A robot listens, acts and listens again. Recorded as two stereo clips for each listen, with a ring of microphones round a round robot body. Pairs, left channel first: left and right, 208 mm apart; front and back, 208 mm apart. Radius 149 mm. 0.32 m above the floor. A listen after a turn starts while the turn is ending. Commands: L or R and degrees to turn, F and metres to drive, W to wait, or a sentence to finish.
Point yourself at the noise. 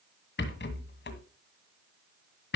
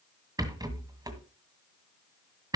L110
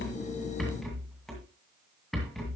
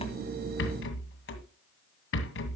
Facing the rattle.